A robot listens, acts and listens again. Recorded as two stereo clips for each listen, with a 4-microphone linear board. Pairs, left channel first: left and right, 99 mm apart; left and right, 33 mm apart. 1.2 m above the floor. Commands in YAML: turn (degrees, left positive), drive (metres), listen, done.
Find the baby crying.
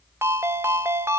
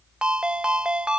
listen: true
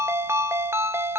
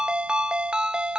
listen: true
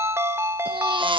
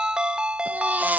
turn: -60
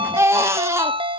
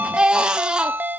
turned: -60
turn: -35
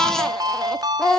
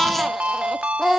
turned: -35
done: "Found it: a baby crying, straight ahead."